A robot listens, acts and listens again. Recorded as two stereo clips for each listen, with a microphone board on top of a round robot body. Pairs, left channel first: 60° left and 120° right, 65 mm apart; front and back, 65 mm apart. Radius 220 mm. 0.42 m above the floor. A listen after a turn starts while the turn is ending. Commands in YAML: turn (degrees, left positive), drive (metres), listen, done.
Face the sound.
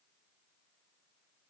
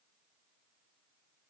listen: true
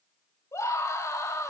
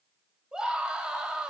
turn: 105
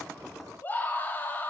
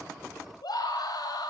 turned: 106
done: "Found it: a scream, straight ahead, 2 to 4 m away."